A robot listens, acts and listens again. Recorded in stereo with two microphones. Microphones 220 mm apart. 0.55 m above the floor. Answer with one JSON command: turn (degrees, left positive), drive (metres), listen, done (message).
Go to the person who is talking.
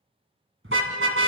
{"listen": true}
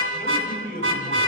{"turn": 40}
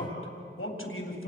{"turn": 95}
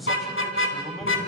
{"drive": 1.0}
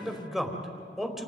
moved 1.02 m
{"drive": 1.0}
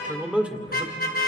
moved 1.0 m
{"drive": 1.0}
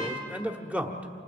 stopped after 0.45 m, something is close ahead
{"turn": -10}
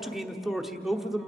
{"done": "I am next to the man speaking."}